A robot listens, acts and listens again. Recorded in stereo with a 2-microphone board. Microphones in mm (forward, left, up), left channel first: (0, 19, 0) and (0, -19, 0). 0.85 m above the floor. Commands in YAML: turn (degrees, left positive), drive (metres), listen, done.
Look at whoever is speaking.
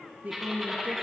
turn: -40
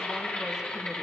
listen: true
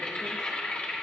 listen: true
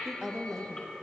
turn: -10
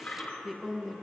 done: "Found it: a woman speaking, straight ahead."